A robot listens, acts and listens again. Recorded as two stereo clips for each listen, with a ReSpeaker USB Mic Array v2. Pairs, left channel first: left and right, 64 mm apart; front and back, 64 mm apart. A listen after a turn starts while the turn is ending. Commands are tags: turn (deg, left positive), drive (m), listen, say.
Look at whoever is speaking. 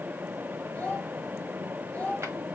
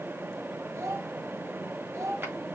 <turn deg="155"/>
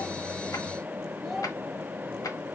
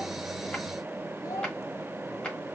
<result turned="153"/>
<say>Facing the child speaking.</say>